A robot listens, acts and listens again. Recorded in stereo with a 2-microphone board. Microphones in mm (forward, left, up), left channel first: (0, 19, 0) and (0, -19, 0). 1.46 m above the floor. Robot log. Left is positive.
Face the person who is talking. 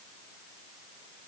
cmd idle
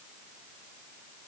cmd idle
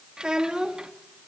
note: The child speaking: about 20° right or 160° right.
cmd yaw -20
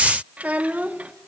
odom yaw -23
note: So it is at 135° right.
cmd yaw -135
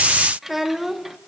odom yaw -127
note: The child speaking is now 10° right.
cmd yaw -10
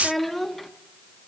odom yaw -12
end: Facing the child speaking.